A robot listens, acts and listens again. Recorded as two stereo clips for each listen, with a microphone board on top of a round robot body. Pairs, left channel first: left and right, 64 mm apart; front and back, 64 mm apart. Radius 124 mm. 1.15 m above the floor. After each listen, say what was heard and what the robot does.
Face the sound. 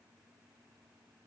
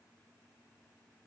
Keep listening.
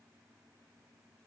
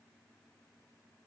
Keep listening.
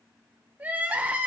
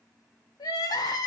The crying: 25° right. Turn 25° right.
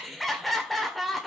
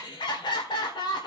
Facing the crying, 1 to 2 m away.